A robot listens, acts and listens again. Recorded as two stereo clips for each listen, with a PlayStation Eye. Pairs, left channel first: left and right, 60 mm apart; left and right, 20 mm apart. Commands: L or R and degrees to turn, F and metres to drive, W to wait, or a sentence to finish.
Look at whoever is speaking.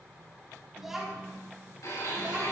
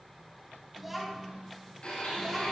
R15
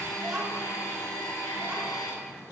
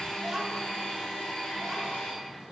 R30
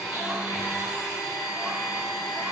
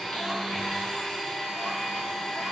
W
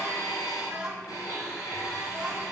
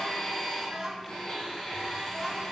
R30
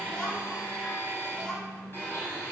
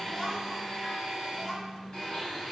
L15
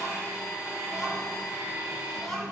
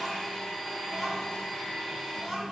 Facing the child speaking, 2 to 4 m away.